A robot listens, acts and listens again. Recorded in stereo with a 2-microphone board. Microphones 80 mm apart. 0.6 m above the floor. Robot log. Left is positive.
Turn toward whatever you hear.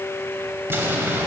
note: The explosion: about 30° right or 150° right.
cmd yaw -30
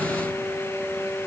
cmd idle
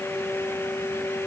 end: I heard an explosion, but can't make it out now. It was about straight ahead or 120° right.